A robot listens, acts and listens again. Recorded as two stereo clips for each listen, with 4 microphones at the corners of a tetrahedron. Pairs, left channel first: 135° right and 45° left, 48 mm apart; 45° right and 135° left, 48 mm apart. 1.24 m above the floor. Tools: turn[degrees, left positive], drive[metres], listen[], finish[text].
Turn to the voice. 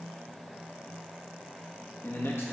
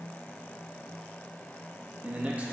Thought: The man speaking: 160° right.
Action: turn[-160]
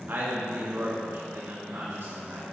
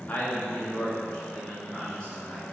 Thought: The man speaking is now 30° left.
Action: turn[30]
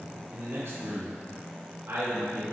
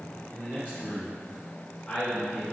Thought: The man speaking is now 10° left.
Action: turn[10]
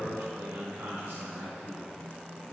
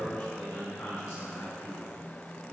Action: finish[Facing the man speaking, 2 to 4 m away.]